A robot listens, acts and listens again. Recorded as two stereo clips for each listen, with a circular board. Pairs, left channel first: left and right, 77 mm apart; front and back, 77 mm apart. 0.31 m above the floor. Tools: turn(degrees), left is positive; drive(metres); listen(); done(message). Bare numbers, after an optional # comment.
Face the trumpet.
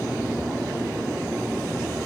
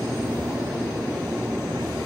listen()
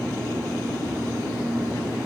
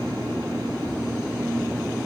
listen()
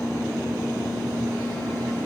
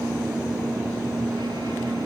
done("I can't make out a trumpet.")